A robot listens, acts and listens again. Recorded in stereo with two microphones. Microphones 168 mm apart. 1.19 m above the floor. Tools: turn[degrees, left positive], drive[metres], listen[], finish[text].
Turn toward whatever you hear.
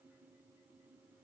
Action: listen[]
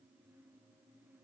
Action: listen[]
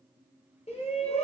Thought: The shout: about 40° left or 140° left.
Action: turn[40]
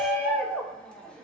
Action: finish[Facing the shout, under 1 m away.]